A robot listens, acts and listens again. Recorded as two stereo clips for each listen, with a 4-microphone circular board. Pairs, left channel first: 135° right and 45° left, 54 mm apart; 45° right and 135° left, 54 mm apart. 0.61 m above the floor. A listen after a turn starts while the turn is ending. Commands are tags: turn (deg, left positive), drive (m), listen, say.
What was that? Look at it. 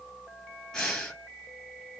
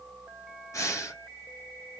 <turn deg="-55"/>
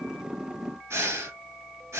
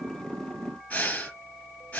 <turn deg="20"/>
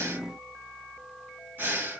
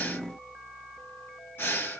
<say>Facing the breathing.</say>